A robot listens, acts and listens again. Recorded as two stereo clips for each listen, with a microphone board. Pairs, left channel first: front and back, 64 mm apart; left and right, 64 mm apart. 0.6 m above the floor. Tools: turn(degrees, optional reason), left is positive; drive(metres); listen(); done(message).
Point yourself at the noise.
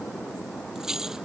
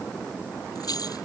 turn(degrees=100, reason="The keys jangling: 100° left.")
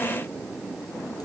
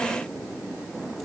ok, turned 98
listen()
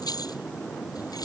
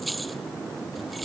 done("Found it: keys jangling, straight ahead.")